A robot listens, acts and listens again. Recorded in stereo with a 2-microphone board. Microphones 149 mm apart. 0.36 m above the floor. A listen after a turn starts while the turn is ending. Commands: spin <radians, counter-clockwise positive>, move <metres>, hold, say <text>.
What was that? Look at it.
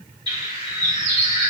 spin -0.52
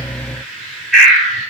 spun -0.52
say Facing the bird, 1 to 2 m away.